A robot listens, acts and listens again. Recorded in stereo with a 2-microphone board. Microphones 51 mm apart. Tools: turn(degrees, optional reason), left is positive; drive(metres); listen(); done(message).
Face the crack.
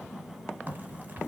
turn(degrees=-40, reason="The crack: about 40° right or 140° right.")
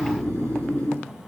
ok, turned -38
listen()
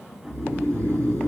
done("I heard a crack, but can't make it out now. It was about straight ahead or 100° right.")